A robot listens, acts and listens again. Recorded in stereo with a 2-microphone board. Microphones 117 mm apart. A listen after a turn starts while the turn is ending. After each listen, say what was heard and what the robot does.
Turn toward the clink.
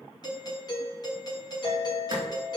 The clink: about 70° right or 110° right. Turn 70° right.
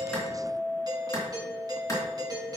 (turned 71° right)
So it is at 10° right. Turn 10° right.
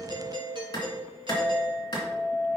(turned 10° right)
Found it: a clink, straight ahead.